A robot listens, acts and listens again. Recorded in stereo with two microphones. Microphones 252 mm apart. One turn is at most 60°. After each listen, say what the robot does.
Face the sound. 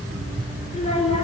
Turn 25° left.
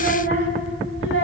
Turn 60° left.
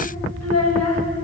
Turn 60° left.
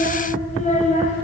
Turn 30° left.
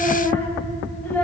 Found it: a child speaking, straight ahead.